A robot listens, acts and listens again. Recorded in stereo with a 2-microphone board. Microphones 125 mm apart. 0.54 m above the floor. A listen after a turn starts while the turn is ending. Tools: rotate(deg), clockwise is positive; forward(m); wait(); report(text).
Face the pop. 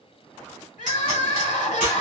rotate(90)
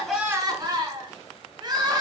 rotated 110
rotate(-20)
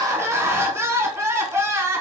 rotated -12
rotate(-10)
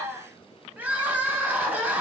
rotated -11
report("I heard a pop from this way, but can't make it out now.")